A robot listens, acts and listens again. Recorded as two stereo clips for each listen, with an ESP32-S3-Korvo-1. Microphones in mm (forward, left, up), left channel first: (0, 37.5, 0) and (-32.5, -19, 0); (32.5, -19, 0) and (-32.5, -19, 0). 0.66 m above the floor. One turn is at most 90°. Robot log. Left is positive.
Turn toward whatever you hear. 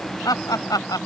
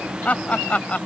note: The laughter: 70° left.
cmd yaw +70
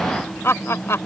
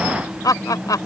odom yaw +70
note: The laughter is now 15° left.
cmd yaw +15
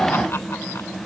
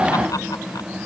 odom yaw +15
cmd idle
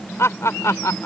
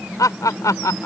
note: The laughter is now 25° left.
cmd yaw +25
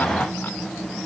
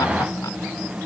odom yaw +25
cmd idle
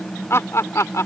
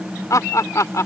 note: The laughter is now 30° left.
cmd yaw +30
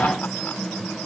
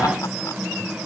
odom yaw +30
cmd idle
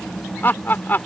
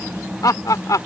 end: Facing the laughter.